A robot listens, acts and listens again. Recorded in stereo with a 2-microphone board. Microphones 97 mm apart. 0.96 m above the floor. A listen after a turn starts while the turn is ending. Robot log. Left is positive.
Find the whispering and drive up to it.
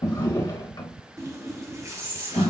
note: The whispering: about 75° right or 105° right.
cmd yaw -75
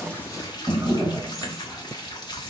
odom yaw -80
cmd idle
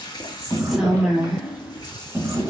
cmd fwd 1.0
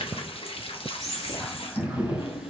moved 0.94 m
cmd fwd 1.0
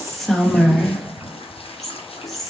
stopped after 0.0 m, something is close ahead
end: Arrived at the whispering, straight ahead.